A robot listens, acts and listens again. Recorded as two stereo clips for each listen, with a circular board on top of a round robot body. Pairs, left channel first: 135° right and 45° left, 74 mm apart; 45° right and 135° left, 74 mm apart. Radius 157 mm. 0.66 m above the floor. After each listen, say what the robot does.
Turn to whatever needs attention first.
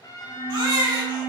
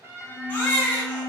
Turn 20° left.
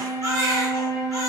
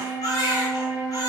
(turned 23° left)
Found it: a baby crying, straight ahead.